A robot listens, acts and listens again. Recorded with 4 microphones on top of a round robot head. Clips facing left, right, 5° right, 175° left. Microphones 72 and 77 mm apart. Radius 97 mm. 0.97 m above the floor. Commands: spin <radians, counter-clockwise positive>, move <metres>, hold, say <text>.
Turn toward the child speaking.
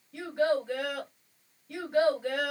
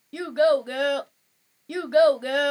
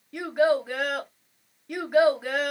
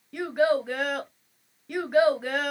spin -1.66
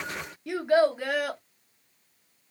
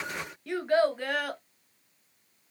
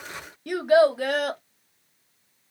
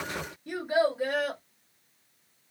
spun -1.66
say Found it: a child speaking, straight ahead, under 1 m away.